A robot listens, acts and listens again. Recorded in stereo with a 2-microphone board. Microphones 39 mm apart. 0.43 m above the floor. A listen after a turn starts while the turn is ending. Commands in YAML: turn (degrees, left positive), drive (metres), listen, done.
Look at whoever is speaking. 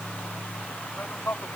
turn: 90
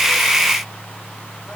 listen: true
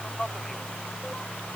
turn: 10
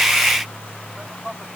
done: "Facing the man speaking."